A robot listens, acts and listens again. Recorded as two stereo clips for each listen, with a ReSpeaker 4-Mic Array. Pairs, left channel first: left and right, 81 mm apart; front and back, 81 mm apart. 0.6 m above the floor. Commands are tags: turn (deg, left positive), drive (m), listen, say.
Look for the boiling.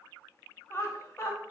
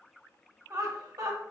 <listen/>
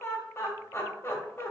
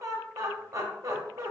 <listen/>
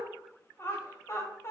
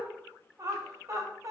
<say>I can't make out boiling, only laughter.</say>